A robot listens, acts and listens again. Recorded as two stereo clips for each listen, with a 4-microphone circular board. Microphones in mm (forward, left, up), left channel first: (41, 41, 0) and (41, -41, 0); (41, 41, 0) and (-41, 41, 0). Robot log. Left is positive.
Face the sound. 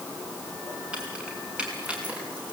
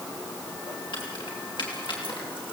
note: The keys jangling: 15° right.
cmd yaw -15
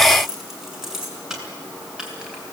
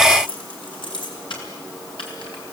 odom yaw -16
note: The keys jangling is now 10° right.
cmd yaw -10
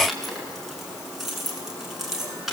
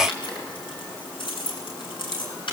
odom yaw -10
end: Facing the keys jangling.